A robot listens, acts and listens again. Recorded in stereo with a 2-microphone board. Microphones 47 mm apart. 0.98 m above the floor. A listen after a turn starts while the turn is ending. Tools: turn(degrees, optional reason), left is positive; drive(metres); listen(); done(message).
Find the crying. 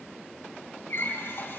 listen()
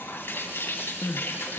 turn(degrees=90)
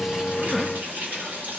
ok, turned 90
listen()
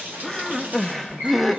done("Found it: crying, straight ahead, under 1 m away.")